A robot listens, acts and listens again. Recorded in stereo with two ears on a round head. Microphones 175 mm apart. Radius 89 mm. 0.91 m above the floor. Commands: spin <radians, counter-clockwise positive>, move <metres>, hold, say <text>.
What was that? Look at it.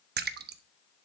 spin -0.96
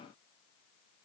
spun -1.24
hold
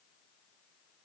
say I heard a splash, but can't make it out now. It was about 15° left or 55° right.